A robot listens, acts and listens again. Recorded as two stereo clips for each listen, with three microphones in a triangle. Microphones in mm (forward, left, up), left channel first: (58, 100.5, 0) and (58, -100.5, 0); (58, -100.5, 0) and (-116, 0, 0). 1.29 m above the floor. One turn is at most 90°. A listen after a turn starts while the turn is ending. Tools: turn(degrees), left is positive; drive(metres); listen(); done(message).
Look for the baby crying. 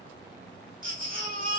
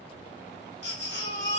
turn(degrees=-50)
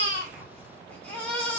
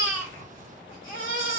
done("Facing the baby crying, 1 to 2 m away.")